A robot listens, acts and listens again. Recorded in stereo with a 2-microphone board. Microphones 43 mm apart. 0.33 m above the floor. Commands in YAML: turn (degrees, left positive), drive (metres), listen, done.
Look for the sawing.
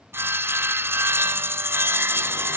turn: -60
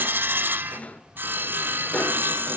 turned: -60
turn: -55
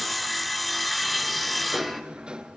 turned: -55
done: "Facing the sawing."